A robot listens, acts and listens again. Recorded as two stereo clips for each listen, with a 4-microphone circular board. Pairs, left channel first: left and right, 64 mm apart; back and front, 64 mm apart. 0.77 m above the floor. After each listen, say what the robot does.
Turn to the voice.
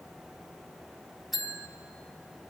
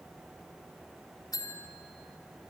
Keep listening.
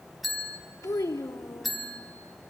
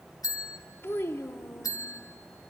Turn 125° left.
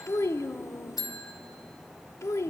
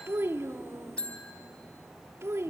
Turn 45° left.
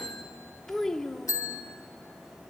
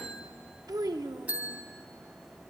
Turn 10° left.
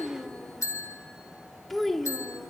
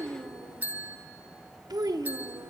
Facing the child speaking.